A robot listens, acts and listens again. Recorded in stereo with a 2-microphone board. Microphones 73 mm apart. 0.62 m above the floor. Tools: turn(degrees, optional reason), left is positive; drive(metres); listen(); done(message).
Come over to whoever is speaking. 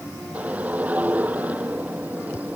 listen()
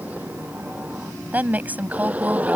turn(degrees=-25, reason="The woman speaking: about 25° right or 155° right.")
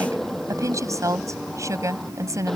turn(degrees=-130, reason="So it is at 130° right.")
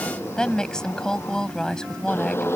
turn(degrees=10, reason="The woman speaking is now 10° left.")
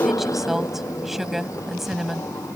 drive(metres=1.0)
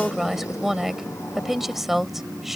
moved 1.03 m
drive(metres=1.0)
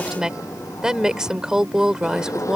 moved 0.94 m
turn(degrees=-10, reason="The woman speaking is now 10° right.")
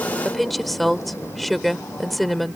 drive(metres=1.0)
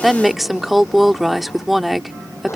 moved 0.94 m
drive(metres=1.0)
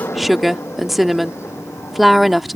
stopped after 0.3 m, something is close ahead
done("Arrived at the woman speaking, straight ahead.")